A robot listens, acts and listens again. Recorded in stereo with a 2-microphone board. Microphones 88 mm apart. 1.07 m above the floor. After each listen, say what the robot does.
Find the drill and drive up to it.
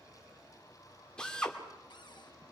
Turn 30° left.
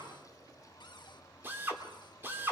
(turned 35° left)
Turn 25° right.
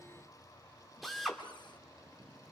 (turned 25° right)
Drive 1.0 m forward.
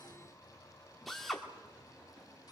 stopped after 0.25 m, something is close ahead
Blocked. The drill is further on, straight ahead.